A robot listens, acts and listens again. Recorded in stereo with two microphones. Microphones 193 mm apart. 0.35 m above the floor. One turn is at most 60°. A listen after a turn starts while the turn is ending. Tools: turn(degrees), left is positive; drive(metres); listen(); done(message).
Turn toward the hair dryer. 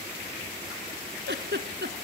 listen()
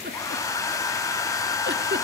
turn(degrees=15)
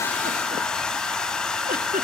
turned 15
done("Found it: a hair dryer, straight ahead.")